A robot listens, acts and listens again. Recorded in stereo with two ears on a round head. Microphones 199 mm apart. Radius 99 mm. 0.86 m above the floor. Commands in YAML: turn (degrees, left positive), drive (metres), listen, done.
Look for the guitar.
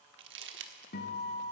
turn: 45
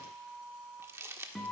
done: "Found it: a guitar, straight ahead, 2 to 4 m away."